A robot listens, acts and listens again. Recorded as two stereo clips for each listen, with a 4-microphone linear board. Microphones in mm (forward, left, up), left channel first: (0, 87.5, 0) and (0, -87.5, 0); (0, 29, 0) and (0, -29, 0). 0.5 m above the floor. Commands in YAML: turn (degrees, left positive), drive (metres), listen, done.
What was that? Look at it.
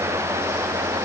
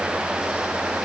listen: true
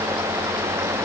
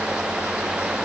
listen: true
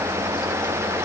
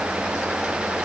done: "I can't make out anything to turn to."